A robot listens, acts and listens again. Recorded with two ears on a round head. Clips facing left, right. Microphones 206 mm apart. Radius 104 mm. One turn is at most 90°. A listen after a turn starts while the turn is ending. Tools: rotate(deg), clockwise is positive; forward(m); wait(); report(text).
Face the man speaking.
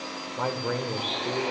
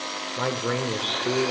rotate(35)
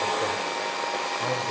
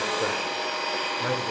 wait()
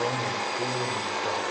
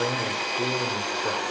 wait()
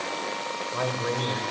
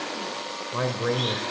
rotate(40)
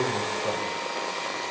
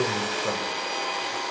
wait()
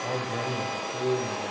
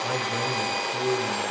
rotate(15)
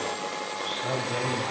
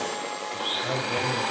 wait()
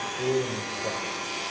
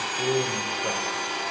wait()
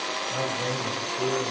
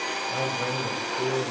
report("I heard a man speaking from this way, but can't make it out now.")